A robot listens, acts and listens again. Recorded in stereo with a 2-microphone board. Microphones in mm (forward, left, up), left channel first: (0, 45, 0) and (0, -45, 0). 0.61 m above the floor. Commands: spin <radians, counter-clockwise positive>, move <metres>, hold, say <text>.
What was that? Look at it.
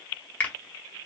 spin 0.35
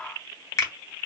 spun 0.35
spin 2.44
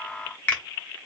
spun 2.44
spin 0.35
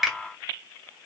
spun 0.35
say Facing the finger snap, under 1 m away.